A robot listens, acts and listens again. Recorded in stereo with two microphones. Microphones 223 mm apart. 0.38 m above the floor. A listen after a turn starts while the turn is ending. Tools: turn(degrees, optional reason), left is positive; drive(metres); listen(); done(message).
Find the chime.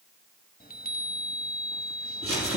turn(degrees=40, reason="The chime: about 40° left or 140° left.")
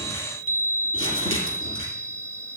turn(degrees=95, reason="So it is at 95° left.")
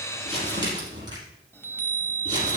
turn(degrees=10, reason="The chime is now 10° left.")
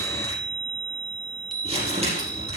done("Facing the chime, 1 to 2 m away.")